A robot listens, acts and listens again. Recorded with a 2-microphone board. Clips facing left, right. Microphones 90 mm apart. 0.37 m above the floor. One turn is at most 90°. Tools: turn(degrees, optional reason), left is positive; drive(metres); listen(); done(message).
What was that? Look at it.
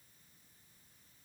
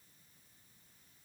listen()
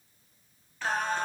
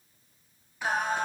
turn(degrees=-30)
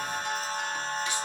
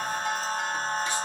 turn(degrees=-90, reason="So it is at 140° right.")
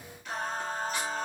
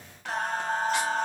turn(degrees=-90, reason="The singing is now 95° right.")
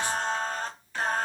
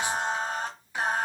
turn(degrees=-15, reason="The singing is now 15° right.")
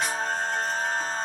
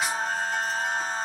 done("Facing the singing, under 1 m away.")